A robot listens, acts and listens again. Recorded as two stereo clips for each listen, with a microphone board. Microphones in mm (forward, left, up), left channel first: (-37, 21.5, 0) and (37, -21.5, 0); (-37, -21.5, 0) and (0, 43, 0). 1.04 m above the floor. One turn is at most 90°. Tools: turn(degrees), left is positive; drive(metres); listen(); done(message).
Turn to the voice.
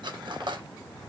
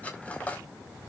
listen()
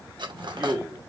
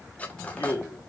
turn(degrees=-85)
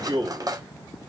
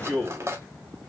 turn(degrees=-20)
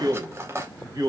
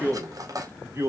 turn(degrees=10)
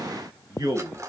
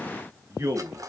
turn(degrees=15)
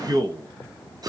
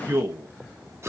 turn(degrees=10)
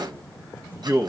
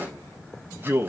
done("Found it: a man speaking, straight ahead.")